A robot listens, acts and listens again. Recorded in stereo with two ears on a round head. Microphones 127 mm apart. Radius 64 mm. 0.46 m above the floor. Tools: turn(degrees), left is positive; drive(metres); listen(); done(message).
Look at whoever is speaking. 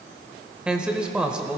turn(degrees=-30)
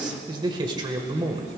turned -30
turn(degrees=-140)
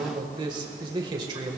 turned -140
turn(degrees=-40)
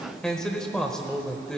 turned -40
done("Facing the man speaking.")